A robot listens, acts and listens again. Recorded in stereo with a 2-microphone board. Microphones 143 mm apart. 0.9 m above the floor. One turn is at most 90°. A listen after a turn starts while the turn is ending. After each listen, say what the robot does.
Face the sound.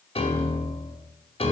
Turn 45° left.
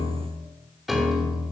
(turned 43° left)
Facing the piano.